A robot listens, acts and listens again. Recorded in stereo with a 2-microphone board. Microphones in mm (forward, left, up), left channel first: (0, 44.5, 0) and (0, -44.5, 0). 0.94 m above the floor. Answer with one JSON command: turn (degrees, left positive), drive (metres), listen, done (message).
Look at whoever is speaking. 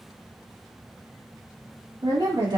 {"turn": -60}
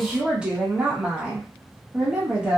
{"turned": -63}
{"turn": -15}
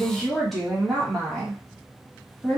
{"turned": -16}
{"done": "Facing the woman speaking, 1 to 2 m away."}